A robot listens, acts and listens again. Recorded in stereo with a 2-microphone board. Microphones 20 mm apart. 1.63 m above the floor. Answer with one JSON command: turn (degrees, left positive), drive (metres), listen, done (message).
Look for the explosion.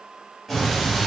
{"turn": 30}
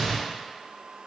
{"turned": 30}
{"turn": -25}
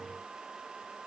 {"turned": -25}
{"done": "Facing where the explosion came from. I can't hear it now."}